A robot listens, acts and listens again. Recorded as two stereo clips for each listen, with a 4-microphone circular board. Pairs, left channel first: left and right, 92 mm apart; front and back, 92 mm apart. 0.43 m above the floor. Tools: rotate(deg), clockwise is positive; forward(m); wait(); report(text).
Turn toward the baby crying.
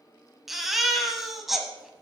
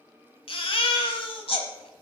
report("Facing the baby crying.")